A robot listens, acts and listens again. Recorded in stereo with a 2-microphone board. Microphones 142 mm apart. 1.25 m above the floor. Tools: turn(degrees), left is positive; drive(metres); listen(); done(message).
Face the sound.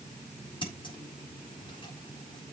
turn(degrees=30)
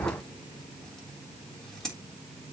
done("Found it: scissors, straight ahead, 2 to 4 m away.")